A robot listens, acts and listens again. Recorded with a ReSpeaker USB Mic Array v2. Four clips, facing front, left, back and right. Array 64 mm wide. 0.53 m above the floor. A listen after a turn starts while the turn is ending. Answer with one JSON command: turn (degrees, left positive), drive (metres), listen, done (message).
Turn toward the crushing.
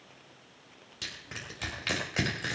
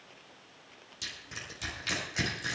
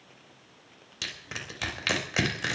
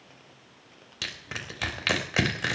{"turn": -115}
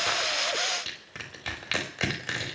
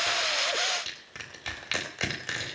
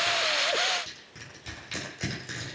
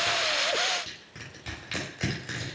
{"turn": 30}
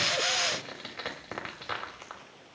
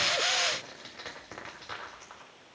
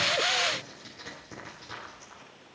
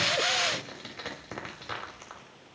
{"turn": -10}
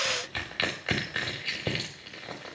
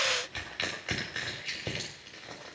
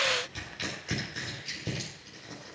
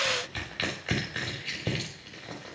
{"done": "Facing the crushing, 2 to 4 m away."}